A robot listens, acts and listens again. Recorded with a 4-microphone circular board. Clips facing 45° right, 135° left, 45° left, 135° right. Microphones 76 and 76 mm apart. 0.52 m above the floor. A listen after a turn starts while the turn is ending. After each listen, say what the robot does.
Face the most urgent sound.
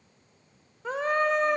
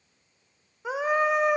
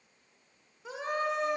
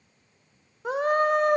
Turn 145° right.
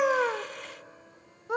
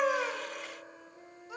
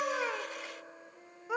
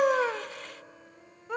Turn 40° right.
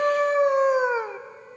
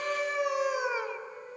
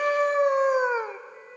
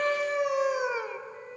Facing the scream, 1 to 2 m away.